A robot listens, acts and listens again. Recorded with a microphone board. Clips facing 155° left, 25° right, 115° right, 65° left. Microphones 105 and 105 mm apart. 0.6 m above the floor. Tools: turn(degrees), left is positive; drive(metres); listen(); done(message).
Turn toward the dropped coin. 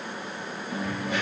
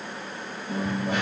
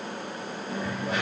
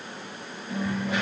turn(degrees=-60)
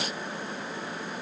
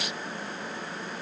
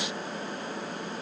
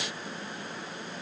done("I heard a dropped coin from this way, but can't make it out now.")